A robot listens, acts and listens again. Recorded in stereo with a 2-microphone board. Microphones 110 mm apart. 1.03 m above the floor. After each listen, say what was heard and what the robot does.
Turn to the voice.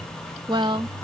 The woman speaking: about 45° right or 135° right. Turn 45° right.
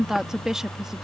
Facing the woman speaking.